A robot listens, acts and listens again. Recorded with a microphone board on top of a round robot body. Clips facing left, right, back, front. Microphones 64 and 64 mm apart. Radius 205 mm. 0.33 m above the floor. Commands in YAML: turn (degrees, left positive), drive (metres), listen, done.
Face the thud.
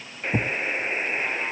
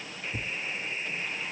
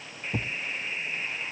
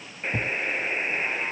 turn: 100
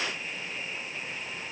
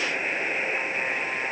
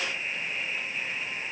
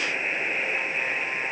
done: "Facing where the thud came from. I can't hear it now."